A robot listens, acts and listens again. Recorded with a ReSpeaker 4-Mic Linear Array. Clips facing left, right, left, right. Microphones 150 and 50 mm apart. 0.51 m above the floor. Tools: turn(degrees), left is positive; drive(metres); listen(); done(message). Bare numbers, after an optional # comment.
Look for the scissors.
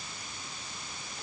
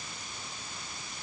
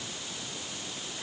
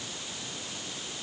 listen()
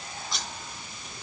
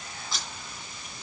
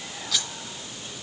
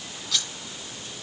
turn(30)
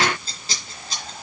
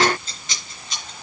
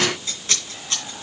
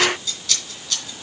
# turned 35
# So it is at 145° left.
turn(145)
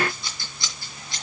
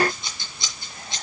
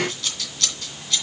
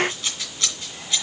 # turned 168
# The scissors is now 20° right.
turn(-20)
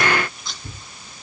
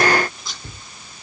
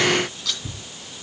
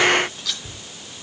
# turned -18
done("Found it: scissors, straight ahead.")